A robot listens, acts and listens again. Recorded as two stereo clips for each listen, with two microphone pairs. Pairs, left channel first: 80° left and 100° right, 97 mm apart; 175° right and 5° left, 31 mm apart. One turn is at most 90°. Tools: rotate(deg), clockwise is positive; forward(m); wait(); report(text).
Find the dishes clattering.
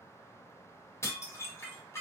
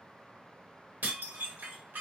rotate(-20)
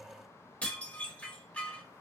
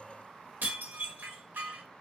report("Facing the dishes clattering, 1 to 2 m away.")